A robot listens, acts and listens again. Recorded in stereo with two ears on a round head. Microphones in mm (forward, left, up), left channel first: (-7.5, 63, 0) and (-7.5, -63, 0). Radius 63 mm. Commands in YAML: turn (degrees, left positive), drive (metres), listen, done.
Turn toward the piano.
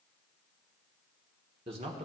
listen: true
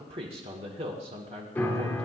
turn: 30
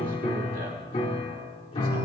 turn: 140
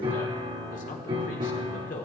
turn: -35
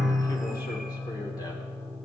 done: "Found it: a piano, straight ahead."